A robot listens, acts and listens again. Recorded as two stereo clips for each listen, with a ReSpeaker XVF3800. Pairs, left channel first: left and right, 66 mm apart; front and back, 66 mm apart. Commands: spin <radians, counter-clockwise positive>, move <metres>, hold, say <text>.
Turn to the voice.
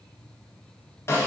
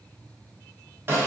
hold
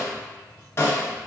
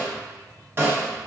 hold
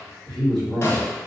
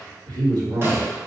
spin 3.05
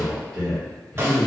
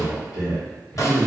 say Facing the man speaking.